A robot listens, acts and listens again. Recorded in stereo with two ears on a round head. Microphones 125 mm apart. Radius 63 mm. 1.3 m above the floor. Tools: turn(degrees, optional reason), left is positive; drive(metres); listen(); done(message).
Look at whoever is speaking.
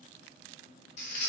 listen()
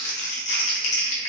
listen()
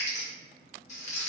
done("I can't make out anyone speaking, only crumpling.")